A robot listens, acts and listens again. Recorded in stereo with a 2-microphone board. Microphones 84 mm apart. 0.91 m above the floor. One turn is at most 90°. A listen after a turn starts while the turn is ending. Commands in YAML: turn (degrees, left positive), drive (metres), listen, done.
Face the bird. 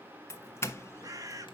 turn: -45
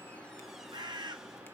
turn: -80
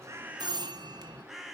done: "Facing the bird."